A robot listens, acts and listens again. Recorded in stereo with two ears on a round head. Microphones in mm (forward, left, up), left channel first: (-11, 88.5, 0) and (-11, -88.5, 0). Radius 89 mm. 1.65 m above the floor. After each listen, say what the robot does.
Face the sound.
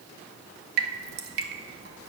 Turn 55° right.
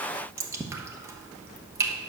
Turn 15° right.
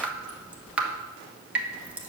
Turn 10° right.
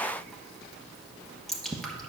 Facing the dripping.